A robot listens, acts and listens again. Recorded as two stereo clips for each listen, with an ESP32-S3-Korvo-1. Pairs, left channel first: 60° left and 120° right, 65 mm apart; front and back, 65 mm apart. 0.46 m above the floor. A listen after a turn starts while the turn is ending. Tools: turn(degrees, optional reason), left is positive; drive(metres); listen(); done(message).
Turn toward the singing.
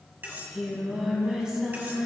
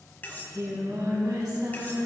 turn(degrees=165, reason="The singing: 165° left.")
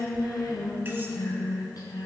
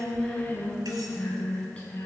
turn(degrees=70, reason="The singing is now 70° left.")
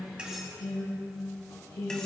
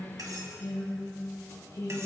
turn(degrees=40, reason="The singing is now 40° left.")
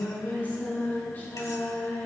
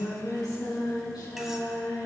done("Found it: singing, straight ahead.")